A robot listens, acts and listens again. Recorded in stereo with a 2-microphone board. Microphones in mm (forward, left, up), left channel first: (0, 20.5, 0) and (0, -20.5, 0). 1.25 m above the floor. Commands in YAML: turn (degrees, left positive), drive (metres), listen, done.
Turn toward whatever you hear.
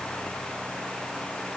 listen: true
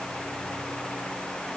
listen: true
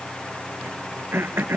turn: -60
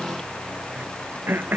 turn: -60
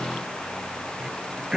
turn: -15
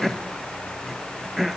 done: "Found it: throat clearing, straight ahead."